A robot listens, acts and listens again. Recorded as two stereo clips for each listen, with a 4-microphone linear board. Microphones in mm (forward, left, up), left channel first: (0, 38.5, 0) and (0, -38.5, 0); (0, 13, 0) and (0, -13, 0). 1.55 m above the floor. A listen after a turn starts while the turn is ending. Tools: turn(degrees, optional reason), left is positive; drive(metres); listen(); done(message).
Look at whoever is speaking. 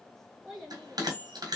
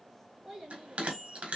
turn(degrees=30)
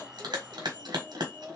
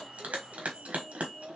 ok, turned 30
turn(degrees=-35, reason="So it is at 35° right.")
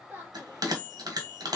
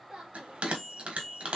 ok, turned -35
listen()
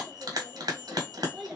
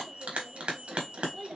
done("Found it: a child speaking, straight ahead, 2 to 4 m away.")